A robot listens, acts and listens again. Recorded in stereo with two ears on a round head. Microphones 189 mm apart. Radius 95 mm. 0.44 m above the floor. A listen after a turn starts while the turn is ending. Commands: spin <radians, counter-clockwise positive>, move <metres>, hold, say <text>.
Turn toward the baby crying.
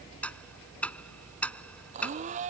hold
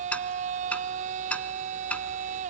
hold
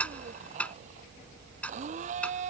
say I can't make out a baby crying, only a blender and ticking.